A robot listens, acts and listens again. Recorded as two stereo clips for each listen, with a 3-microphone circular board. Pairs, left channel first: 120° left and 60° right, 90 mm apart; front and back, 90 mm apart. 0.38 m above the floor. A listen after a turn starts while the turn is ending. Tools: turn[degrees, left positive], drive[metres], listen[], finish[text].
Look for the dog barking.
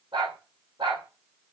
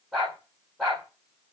Thought: The dog barking: 85° right.
Action: turn[-85]
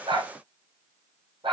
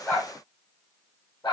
Thought: The dog barking is now 35° right.
Action: turn[-35]
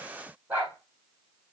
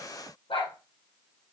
Thought: The dog barking is now 15° left.
Action: turn[15]
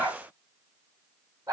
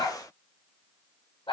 Action: finish[Facing the dog barking.]